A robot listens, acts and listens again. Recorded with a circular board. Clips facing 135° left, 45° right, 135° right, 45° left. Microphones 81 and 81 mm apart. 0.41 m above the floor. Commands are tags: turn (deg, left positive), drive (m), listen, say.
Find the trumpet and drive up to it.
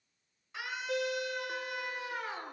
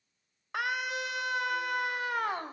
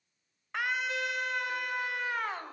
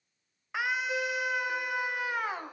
<listen/>
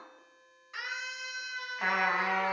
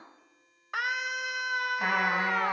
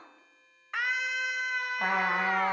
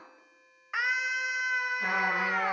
<turn deg="-130"/>
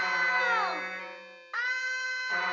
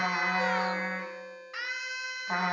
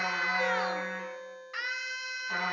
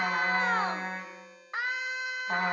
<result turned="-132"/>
<drive m="1.0"/>
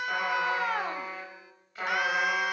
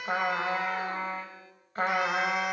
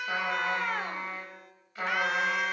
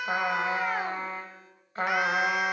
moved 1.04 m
<drive m="1.0"/>
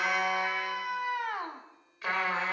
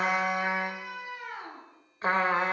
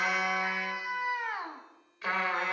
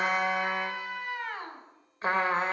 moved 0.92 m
<drive m="1.0"/>
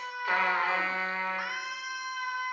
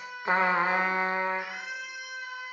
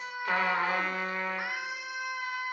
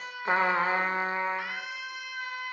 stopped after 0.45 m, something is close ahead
<say>Arrived at the trumpet, straight ahead.</say>